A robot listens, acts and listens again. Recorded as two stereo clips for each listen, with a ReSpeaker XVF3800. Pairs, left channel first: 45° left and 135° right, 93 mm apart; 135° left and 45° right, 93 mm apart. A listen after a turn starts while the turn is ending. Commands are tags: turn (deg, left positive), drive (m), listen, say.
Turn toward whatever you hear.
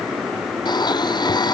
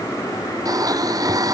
<say>Facing the blender.</say>